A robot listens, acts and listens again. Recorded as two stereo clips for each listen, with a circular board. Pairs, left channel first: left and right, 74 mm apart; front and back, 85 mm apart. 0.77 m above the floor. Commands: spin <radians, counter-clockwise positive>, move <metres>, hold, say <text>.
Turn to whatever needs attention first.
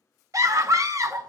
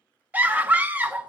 spin -2.01
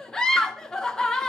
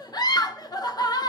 spin 0.17
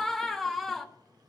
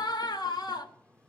say Found it: a scream, straight ahead.